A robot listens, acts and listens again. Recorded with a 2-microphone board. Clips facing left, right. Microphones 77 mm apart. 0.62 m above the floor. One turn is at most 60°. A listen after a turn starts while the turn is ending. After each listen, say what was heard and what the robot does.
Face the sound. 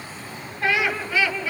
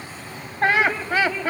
The laughter: about 50° right or 130° right. Turn 50° right.
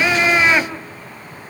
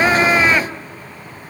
Facing the laughter, 2 to 4 m away.